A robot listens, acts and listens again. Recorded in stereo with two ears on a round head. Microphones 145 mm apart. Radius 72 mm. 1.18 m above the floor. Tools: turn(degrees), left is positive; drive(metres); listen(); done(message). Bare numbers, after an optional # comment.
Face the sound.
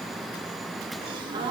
# The gasp: about 30° right or 150° right.
turn(-30)
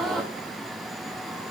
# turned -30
done("Facing the gasp, 1 to 2 m away.")